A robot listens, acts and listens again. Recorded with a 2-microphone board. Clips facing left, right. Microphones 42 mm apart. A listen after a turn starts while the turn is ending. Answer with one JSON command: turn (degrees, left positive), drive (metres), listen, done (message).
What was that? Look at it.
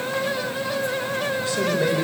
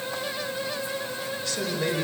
{"turn": 25}
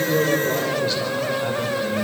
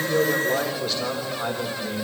{"done": "Facing the man speaking."}